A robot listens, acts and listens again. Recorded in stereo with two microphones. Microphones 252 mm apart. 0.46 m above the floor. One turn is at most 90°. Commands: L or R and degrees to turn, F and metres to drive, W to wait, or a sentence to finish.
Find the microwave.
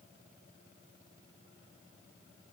W
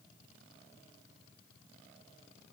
W
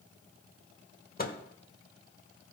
L35
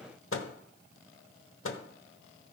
L90
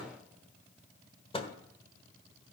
L25
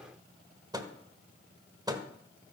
R20
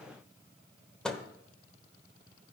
Found it: a microwave, straight ahead, 1 to 2 m away.